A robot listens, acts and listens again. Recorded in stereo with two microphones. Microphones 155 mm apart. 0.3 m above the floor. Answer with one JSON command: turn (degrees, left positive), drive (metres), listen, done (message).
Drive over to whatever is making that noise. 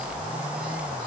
{"listen": true}
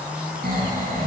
{"turn": -90}
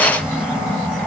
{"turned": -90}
{"drive": 1.0}
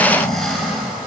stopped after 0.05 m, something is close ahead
{"done": "Blocked. The snoring is further on, straight ahead."}